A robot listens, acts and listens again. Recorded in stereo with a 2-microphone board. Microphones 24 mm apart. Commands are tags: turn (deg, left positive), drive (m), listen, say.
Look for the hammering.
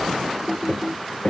<turn deg="65"/>
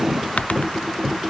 <say>Facing the hammering.</say>